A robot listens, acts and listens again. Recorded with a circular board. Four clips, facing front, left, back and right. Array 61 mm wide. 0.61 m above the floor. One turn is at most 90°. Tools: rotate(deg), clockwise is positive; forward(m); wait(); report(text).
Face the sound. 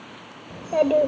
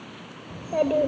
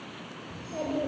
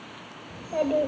rotate(-20)
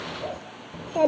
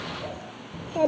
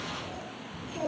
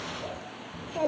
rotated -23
rotate(-20)
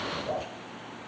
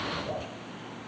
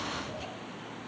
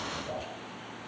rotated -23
rotate(-15)
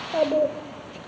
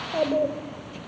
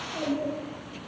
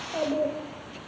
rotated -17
rotate(-25)
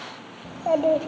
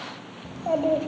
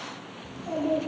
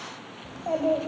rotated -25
rotate(-15)
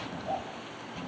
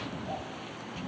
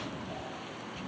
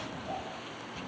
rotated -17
report("Facing the child speaking.")